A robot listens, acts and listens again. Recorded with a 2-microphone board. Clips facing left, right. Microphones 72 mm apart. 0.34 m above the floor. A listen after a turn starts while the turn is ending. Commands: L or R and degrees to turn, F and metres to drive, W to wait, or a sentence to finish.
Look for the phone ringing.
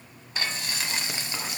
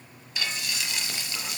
W
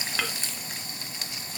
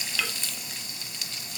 W
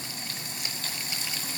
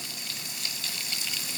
I can't make out a phone ringing to turn to.